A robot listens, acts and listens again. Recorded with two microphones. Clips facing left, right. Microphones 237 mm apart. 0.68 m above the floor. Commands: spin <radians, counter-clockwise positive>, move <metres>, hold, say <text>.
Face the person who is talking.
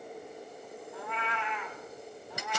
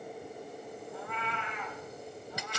hold
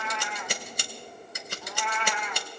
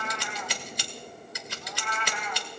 hold
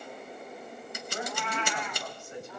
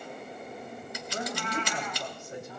spin -0.79
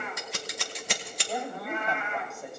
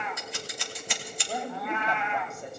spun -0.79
say Found it: a woman speaking, straight ahead, 2 to 4 m away.